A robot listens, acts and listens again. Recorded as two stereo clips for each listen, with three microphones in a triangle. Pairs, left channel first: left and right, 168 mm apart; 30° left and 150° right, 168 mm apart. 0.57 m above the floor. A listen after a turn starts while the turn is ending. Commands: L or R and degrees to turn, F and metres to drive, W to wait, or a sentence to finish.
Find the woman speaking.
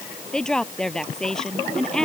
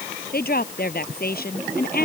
Found it: a woman speaking, straight ahead.